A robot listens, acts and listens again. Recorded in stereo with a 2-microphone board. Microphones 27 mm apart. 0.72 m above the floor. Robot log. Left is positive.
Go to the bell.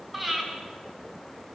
cmd idle
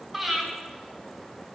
cmd idle
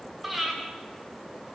end: I can't make out a bell to turn to.